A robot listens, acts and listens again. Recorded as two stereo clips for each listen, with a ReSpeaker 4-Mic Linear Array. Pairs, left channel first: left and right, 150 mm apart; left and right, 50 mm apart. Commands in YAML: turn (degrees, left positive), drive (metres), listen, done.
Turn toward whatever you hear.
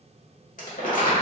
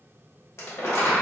turn: 65
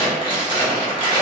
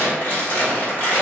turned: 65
turn: 35
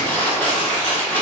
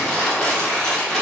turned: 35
turn: 15
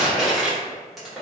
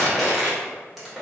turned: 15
done: "Facing the crumpling, 1 to 2 m away."